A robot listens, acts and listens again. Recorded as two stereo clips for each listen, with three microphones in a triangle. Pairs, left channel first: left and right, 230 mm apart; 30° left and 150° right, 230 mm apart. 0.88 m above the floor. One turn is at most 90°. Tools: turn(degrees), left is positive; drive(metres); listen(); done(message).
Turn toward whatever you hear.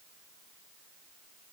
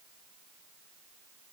listen()
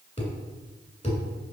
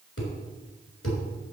turn(degrees=30)
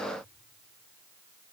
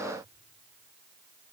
done("Facing where the thud came from. I can't hear it now.")